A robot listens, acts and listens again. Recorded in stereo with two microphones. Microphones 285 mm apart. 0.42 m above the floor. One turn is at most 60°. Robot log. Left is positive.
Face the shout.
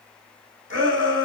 note: The shout: about 45° right or 135° right.
cmd yaw -45
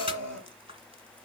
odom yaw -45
note: So it is at 85° right.
cmd yaw -60
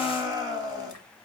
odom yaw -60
note: The shout is now 15° right.
cmd yaw -15
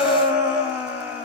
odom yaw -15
end: Found it: a shout, straight ahead, 2 to 4 m away.